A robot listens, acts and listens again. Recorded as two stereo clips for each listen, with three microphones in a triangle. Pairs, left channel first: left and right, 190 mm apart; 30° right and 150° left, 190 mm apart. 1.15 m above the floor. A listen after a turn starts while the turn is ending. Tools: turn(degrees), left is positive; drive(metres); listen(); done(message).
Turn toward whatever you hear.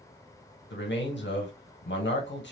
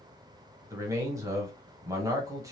turn(degrees=80)
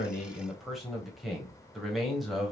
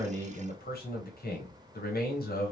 done("Facing the man speaking, 1 to 2 m away.")